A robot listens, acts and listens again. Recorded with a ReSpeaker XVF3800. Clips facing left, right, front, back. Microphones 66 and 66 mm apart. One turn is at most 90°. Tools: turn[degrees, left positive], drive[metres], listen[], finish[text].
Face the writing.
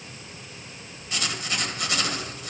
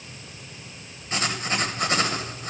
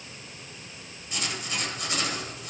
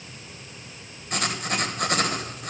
Thought: The writing: 145° right.
Action: turn[-90]
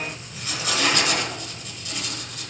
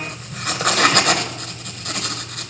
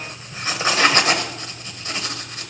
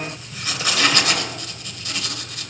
Thought: The writing is now 60° right.
Action: turn[-60]
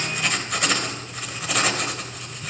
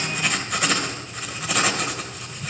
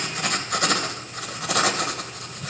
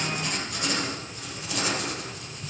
Action: finish[Facing the writing, 1 to 2 m away.]